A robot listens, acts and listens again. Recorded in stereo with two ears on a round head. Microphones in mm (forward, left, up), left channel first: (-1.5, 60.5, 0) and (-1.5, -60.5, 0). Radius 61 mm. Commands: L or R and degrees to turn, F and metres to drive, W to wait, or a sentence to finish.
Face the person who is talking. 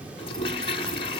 W
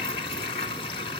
W
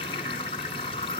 I can't make out anyone speaking to turn to.